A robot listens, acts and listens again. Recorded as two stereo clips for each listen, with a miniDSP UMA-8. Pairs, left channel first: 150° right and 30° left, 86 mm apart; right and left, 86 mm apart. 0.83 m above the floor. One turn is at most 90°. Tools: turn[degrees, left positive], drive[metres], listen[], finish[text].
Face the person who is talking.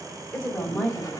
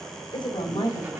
Thought: The woman speaking: 65° right.
Action: turn[-65]
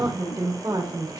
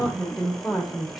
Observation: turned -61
Action: finish[Found it: a woman speaking, straight ahead.]